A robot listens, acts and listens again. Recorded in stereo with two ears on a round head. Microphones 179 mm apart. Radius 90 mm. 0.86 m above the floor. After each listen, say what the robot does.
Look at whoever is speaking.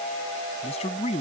Turn 30° left.
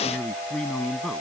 Facing the man speaking.